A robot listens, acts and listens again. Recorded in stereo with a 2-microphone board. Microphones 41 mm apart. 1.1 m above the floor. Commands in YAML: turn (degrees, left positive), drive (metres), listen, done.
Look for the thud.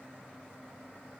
listen: true
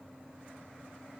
listen: true
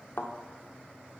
turn: 65
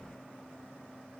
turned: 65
listen: true
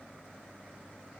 done: "I heard a thud, but can't make it out now. It was about straight ahead or 50° left."